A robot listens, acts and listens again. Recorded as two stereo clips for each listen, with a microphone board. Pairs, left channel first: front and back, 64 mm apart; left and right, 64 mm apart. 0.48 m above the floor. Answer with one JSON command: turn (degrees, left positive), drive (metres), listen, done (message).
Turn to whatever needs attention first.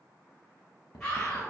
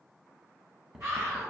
{"turn": -70}
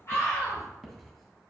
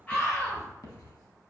{"turn": 25}
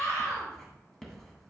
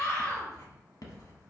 {"turn": 20}
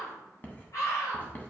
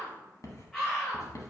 {"done": "Facing the scream."}